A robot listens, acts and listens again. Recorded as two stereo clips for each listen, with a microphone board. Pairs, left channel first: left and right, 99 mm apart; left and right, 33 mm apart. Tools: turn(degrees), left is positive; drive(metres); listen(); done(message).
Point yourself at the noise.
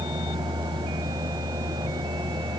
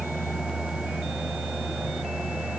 listen()
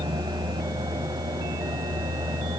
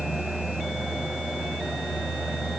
listen()
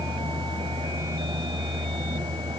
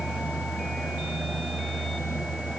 done("I can't make out anything to turn to.")